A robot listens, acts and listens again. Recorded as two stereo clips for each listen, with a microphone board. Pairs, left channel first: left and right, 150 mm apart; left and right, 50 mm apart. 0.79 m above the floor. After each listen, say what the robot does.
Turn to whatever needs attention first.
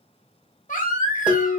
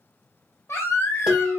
Turn 60° left.
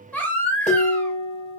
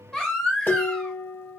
Turn 10° left.
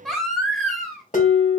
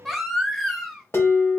Found it: a baby crying, straight ahead.